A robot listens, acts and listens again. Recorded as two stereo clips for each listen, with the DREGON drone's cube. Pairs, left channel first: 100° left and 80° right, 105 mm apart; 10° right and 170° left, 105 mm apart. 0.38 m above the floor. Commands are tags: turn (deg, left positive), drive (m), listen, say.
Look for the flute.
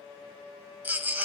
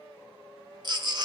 <listen/>
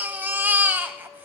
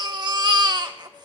<listen/>
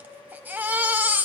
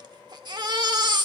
<say>I can't make out a flute to turn to.</say>